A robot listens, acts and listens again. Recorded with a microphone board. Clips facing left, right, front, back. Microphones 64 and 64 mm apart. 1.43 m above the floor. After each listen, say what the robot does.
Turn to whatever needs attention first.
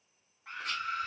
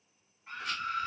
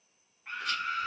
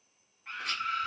Turn 85° left.
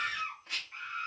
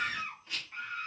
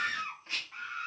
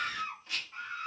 Facing the scream.